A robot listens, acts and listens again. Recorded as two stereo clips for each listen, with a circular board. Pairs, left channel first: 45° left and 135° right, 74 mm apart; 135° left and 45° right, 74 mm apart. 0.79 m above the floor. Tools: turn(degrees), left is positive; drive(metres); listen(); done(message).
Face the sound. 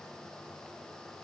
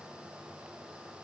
listen()
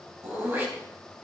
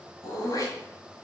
turn(degrees=165)
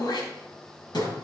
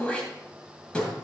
turn(degrees=55)
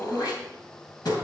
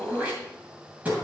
turn(degrees=20)
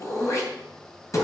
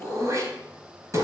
done("Facing the throat clearing.")